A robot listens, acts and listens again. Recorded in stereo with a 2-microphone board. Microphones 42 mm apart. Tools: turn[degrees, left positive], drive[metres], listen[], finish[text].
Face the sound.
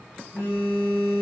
Thought: The phone buzzing: about 70° left or 110° left.
Action: turn[70]
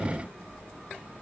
Action: listen[]
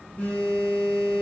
Thought: So it is at 40° left.
Action: turn[40]
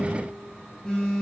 Thought: The phone buzzing is now 15° left.
Action: turn[15]
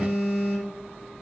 Action: finish[Facing the phone buzzing, 1 to 2 m away.]